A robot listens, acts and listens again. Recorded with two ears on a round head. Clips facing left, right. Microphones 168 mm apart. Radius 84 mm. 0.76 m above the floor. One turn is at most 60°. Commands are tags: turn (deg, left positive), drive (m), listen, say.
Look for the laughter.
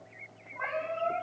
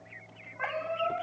<listen/>
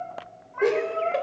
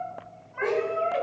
<turn deg="55"/>
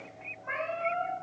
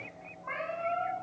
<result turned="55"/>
<listen/>
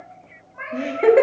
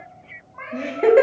<say>Facing the laughter, 1 to 2 m away.</say>